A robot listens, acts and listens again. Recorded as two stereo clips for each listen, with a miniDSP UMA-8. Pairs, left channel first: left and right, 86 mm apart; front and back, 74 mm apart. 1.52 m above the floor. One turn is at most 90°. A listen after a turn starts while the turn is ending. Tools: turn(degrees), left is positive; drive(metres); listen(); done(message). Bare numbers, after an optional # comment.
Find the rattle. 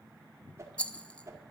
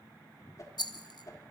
# The rattle: 15° left.
turn(15)
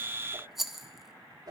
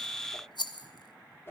done("Facing the rattle.")